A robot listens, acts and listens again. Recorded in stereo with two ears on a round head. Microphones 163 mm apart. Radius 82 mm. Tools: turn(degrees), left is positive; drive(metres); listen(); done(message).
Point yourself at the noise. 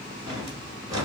turn(degrees=-20)
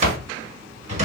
turn(degrees=-140)
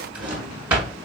turn(degrees=-10)
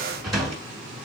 done("Found it: a drawer, straight ahead.")